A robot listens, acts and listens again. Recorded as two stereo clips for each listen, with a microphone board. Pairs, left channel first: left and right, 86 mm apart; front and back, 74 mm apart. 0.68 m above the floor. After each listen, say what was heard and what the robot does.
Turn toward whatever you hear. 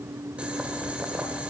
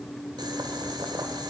The boiling: 165° right. Turn 165° right.
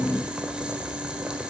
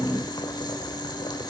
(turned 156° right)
The boiling is now 10° right. Turn 10° right.
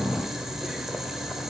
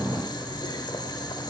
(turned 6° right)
Found it: boiling, straight ahead, 1 to 2 m away.